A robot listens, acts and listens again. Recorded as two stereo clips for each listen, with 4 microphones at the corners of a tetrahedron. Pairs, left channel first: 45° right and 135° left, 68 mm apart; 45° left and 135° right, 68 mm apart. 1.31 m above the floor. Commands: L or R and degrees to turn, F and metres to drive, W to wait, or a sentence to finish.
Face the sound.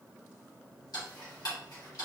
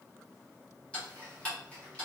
R25
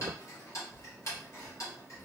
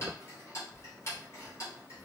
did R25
Facing the ticking.